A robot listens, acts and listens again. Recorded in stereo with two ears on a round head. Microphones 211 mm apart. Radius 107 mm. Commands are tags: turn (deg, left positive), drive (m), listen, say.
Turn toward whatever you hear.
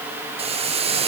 <turn deg="-25"/>
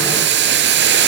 <turn deg="-130"/>
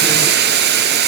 <turn deg="-45"/>
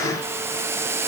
<turn deg="-10"/>
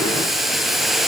<say>Found it: boiling, straight ahead, 1 to 2 m away.</say>